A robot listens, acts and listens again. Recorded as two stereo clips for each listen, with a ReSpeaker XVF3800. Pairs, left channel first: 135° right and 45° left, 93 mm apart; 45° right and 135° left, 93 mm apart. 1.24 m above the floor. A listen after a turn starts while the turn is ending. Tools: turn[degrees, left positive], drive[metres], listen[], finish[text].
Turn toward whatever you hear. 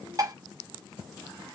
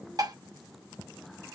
Thought: The dishes clattering: 95° left.
Action: turn[95]
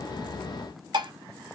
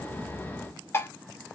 Thought: The dishes clattering is now 15° left.
Action: turn[15]
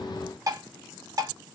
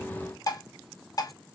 Action: finish[Found it: dishes clattering, straight ahead.]